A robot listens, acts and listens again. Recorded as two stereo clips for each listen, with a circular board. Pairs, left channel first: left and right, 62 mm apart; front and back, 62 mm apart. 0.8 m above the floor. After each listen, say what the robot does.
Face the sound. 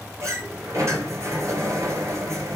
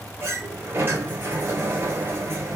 Turn 125° right.
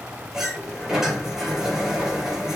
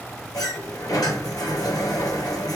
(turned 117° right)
Turn 10° right.
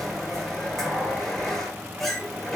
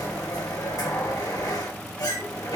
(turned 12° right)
Facing the sliding door, over 4 m away.